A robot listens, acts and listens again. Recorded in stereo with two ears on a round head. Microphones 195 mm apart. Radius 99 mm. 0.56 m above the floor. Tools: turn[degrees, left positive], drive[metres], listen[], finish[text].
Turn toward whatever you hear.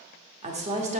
Thought: The woman speaking: about 35° right or 145° right.
Action: turn[-35]
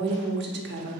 Thought: So it is at 105° right.
Action: turn[-105]
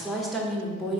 Action: finish[Facing the woman speaking.]